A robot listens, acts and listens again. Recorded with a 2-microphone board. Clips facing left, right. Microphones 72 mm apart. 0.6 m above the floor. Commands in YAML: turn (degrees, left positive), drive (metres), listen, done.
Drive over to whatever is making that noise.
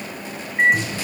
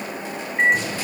turn: 30
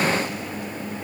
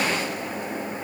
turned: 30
listen: true
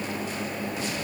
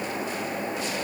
listen: true
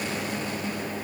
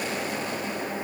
done: "I heard a microwave, but can't make it out now. It was about 25° right or 145° left. I did not reach it."